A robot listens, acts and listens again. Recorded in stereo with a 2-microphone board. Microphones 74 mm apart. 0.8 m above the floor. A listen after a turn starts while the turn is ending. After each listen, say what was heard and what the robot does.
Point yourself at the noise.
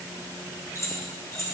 The keys jangling: about 45° left or 135° left. Turn 45° left.
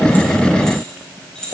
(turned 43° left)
So it is at 10° left. Turn 10° left.
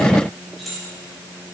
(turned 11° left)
Found it: keys jangling, straight ahead, over 4 m away.